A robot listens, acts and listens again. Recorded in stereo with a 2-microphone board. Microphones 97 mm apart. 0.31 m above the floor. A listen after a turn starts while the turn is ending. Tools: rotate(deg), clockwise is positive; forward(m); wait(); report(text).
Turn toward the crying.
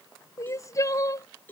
rotate(-35)
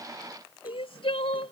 rotate(-110)
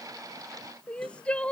rotate(-10)
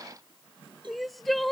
report("Found it: crying, straight ahead.")